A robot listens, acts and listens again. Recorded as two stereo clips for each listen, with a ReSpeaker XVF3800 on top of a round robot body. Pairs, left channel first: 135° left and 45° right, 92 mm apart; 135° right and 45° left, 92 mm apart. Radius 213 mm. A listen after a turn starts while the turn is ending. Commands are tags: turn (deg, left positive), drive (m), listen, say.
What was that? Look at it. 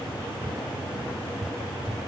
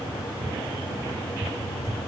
<turn deg="-10"/>
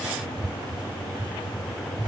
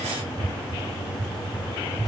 <say>Found it: a cupboard door, straight ahead.</say>